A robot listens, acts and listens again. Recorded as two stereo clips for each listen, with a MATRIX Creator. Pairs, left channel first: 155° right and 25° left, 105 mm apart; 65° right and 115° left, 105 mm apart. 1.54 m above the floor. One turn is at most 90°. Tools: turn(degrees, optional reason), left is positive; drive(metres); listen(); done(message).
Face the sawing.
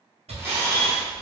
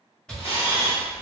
turn(degrees=15, reason="The sawing: 15° left.")
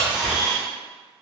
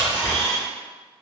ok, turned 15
done("Facing the sawing.")